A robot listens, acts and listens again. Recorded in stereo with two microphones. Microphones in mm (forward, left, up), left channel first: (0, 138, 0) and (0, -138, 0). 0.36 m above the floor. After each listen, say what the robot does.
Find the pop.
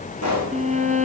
Turn 90° left.
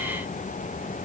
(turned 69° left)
Turn 20° left.
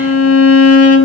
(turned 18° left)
Facing where the pop came from. I can't hear it now.